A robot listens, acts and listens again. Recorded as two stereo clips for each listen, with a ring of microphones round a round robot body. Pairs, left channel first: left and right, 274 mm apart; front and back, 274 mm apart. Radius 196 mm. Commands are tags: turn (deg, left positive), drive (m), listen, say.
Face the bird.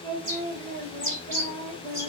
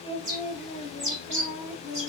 <turn deg="-150"/>
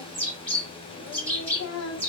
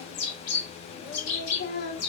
<turn deg="20"/>
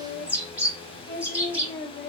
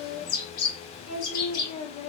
<say>Found it: a bird, straight ahead.</say>